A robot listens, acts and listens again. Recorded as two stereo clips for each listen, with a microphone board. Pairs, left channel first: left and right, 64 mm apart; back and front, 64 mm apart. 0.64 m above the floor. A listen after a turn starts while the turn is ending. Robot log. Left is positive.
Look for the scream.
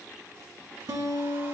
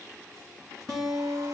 cmd idle
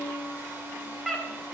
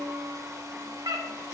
end: Found it: a scream, straight ahead.